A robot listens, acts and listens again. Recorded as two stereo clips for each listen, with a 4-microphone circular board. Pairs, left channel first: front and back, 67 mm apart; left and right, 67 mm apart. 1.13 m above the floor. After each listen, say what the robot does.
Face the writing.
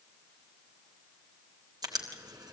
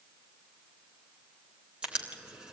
Turn 165° right.
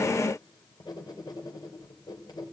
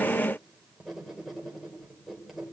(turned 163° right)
Facing the writing, 2 to 4 m away.